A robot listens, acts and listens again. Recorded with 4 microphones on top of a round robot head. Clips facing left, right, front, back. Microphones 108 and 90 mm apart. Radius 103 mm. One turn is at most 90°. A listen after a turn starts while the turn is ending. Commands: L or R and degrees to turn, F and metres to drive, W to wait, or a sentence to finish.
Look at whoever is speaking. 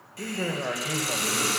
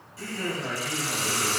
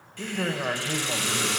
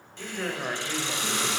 L70
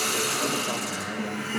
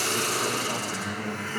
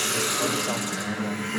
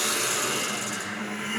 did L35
L35
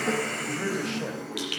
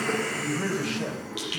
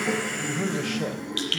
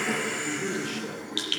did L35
Facing the man speaking, 2 to 4 m away.